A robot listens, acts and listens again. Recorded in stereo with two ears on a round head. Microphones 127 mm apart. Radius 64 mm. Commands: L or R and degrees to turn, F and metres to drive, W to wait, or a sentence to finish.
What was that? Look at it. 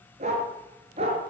R45
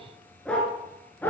L10
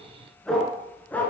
L10
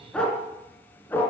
L15
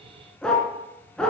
Found it: a dog barking, straight ahead.